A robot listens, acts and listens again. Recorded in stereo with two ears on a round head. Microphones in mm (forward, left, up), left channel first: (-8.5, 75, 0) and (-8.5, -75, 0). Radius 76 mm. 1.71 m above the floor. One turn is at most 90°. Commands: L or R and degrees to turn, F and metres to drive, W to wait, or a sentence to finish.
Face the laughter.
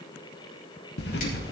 W
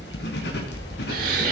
R55
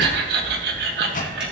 R65
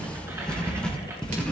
W
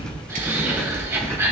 R15
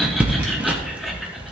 W
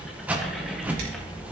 W
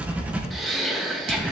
Found it: laughter, straight ahead.